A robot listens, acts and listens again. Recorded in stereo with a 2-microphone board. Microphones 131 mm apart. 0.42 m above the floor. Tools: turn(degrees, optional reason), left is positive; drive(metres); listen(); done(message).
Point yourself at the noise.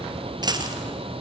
turn(degrees=-35, reason="The dropped coin: about 35° right or 145° right.")
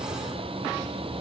listen()
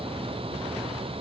done("I heard a dropped coin, but can't make it out now. It was about straight ahead or 110° right.")